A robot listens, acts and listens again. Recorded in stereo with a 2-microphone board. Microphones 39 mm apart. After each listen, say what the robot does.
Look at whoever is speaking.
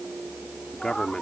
Turn 15° left.
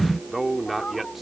Turn 30° right.
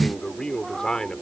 Turn 20° left.
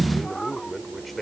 Found it: a man speaking, straight ahead.